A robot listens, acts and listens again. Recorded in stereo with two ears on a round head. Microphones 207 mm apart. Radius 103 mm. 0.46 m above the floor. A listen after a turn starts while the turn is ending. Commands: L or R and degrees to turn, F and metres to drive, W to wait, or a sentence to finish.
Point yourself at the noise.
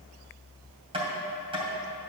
R25
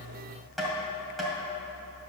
Found it: tapping, straight ahead, 2 to 4 m away.